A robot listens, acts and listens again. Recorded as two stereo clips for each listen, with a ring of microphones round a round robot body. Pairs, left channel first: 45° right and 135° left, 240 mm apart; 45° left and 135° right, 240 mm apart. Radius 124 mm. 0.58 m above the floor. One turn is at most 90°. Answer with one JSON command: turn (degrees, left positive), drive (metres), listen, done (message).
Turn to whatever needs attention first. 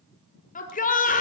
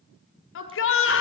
{"turn": 10}
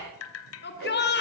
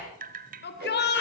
{"done": "Found it: a shout, straight ahead."}